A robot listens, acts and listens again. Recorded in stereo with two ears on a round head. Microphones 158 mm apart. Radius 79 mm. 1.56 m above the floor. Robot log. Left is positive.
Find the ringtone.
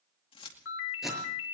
cmd yaw +90
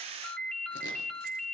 end: Found it: a ringtone, straight ahead.